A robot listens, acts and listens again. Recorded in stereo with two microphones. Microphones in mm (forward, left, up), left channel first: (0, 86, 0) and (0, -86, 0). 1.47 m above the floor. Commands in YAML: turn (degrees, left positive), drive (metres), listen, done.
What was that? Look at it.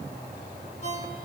turn: 45
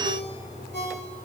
turn: 90
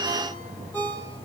turn: 10
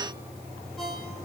done: "Facing the ringtone, over 4 m away."